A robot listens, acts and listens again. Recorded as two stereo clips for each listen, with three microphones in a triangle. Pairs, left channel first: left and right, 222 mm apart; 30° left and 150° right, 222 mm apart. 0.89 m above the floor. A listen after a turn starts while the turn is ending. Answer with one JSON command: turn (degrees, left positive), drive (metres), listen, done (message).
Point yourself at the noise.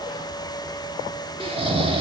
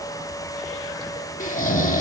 {"turn": -25}
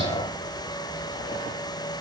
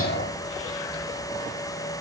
{"listen": true}
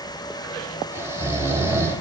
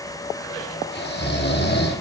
{"turn": -10}
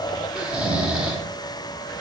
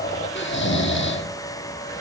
{"done": "Found it: snoring, straight ahead."}